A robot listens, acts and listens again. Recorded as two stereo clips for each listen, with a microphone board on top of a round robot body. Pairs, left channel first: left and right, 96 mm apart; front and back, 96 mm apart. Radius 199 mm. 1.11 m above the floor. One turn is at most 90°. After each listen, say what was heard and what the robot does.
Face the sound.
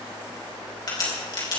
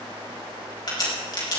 The crack: 45° left. Turn 45° left.
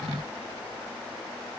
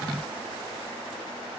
I heard a crack from this way, but can't make it out now.